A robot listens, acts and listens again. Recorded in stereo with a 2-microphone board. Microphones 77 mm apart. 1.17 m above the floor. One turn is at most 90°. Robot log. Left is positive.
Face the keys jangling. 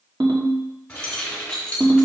cmd yaw +30
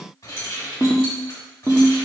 note: So it is at 140° left.
cmd yaw +90
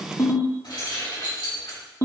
note: The keys jangling is now 70° left.
cmd yaw +70
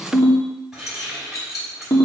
end: Found it: keys jangling, straight ahead.